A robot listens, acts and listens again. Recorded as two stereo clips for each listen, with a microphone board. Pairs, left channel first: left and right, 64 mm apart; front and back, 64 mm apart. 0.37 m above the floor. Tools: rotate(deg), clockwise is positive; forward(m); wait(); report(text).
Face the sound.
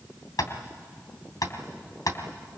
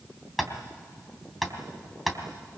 rotate(-90)
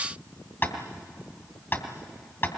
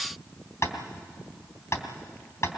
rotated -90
rotate(-40)
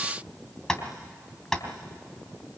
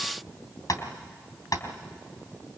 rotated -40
rotate(-10)
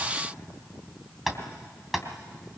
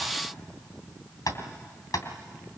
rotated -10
report("Facing the tapping, 2 to 4 m away.")